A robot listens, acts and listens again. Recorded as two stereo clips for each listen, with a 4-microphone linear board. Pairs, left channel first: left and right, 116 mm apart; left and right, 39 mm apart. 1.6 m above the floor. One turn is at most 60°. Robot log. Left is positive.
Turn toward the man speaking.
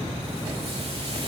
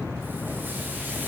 cmd idle
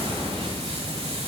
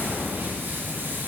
cmd idle
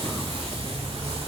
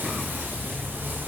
end: I can't make out a man speaking to turn to.